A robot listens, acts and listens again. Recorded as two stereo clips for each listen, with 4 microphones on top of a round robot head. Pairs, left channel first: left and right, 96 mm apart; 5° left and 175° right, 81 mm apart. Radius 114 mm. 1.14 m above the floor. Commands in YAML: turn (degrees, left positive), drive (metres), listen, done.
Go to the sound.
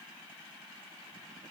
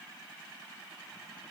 listen: true
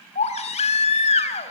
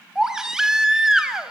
turn: 105
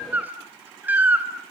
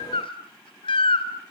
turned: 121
turn: -15
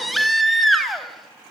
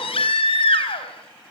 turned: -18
drive: 1.0
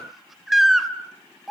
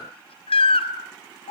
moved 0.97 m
drive: 1.0
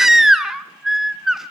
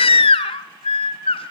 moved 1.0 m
drive: 1.0
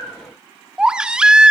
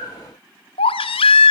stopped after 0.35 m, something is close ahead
turn: -10
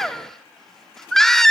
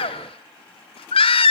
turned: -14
done: "Arrived at the baby crying, straight ahead."